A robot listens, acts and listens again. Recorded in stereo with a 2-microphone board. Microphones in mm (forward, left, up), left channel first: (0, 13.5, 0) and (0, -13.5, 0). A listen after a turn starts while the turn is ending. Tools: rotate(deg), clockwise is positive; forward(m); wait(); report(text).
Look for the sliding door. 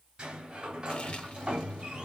rotate(35)
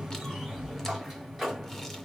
report("Facing the sliding door.")